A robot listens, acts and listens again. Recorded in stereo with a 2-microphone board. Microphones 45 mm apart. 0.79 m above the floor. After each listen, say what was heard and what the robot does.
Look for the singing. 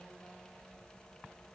Keep listening.
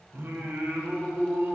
The singing: about 60° right or 120° right. Turn 60° right.
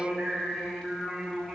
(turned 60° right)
So it is at 10° right. Turn 10° right.
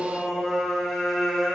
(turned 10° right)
Facing the singing.